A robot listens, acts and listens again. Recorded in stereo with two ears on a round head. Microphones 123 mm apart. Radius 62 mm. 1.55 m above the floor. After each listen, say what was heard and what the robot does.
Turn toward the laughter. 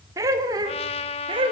The laughter: about 40° right or 140° right. Turn 40° right.
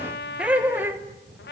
So it is at 15° right. Turn 15° right.
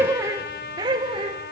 The laughter is now 35° right. Turn 35° right.
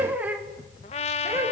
The laughter is now 20° right. Turn 20° right.
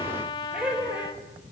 The laughter is now 10° right. Turn 10° right.
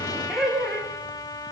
Found it: laughter, straight ahead, 2 to 4 m away.